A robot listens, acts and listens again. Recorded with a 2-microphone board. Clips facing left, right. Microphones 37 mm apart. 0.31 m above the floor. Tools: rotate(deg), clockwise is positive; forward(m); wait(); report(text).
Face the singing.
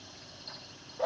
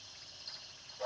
wait()
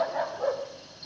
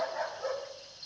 wait()
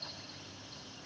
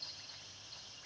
report("I can't make out singing to turn to.")